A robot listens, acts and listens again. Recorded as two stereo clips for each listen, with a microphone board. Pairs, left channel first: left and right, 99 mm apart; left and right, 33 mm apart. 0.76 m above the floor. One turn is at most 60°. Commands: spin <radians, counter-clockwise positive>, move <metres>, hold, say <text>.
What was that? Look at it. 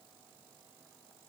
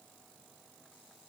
hold
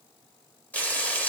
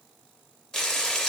spin 0.52
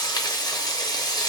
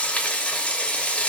spin 1.05
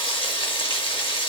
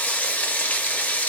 spin 1.05
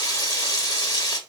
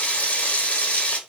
spin 0.79
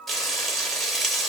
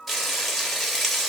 say Found it: frying, straight ahead, under 1 m away.